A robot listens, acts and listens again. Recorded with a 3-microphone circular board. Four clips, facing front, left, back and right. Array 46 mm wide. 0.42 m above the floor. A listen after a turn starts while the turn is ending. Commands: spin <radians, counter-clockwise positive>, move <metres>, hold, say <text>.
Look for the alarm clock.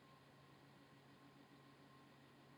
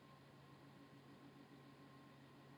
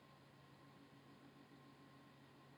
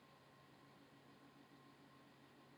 hold
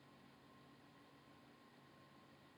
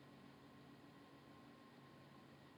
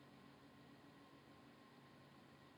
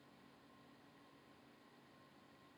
hold
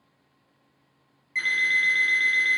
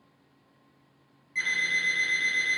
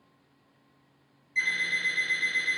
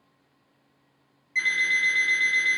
spin -0.26
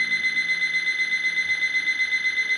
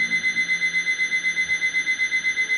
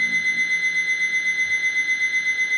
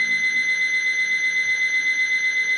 say Found it: an alarm clock, straight ahead, 1 to 2 m away.